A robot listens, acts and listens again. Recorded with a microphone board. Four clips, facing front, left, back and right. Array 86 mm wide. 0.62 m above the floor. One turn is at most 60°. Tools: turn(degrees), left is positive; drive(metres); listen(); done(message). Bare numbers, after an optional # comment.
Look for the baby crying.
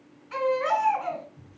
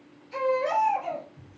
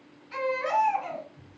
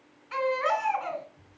# The baby crying: 70° right.
turn(-60)
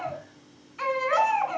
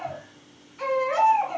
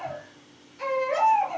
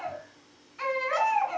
done("Found it: a baby crying, straight ahead.")